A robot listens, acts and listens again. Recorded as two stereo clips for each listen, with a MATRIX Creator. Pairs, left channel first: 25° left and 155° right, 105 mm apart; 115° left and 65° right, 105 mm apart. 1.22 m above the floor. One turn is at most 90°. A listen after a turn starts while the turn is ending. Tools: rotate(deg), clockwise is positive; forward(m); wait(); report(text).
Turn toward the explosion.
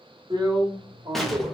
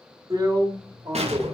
rotate(65)
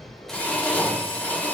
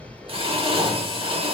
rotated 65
report("Facing where the explosion came from. I can't hear it now.")